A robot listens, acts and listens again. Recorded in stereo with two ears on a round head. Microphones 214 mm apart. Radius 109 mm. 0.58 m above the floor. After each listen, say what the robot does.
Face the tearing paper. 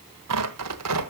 Turn 90° right.
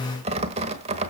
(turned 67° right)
Turn 25° right.
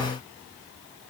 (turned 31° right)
Keep listening.
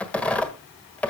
Facing the tearing paper, 1 to 2 m away.